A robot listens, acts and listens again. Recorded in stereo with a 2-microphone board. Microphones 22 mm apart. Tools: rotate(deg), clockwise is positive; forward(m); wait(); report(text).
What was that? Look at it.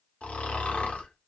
rotate(-90)
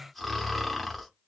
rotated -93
report("Found it: snoring, straight ahead, under 1 m away.")